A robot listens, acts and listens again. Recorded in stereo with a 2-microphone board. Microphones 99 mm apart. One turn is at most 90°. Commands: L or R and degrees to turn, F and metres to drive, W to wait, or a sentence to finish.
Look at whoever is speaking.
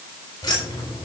W
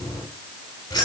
W
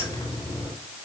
I can't make out anyone speaking to turn to.